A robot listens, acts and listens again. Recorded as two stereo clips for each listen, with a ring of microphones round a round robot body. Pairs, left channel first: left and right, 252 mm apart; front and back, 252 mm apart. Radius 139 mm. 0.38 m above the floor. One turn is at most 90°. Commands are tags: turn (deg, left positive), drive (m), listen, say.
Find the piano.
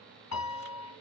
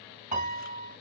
<turn deg="90"/>
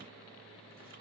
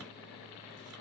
<turn deg="30"/>
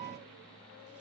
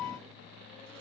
<turn deg="-10"/>
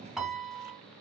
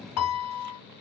<say>Found it: a piano, straight ahead, 2 to 4 m away.</say>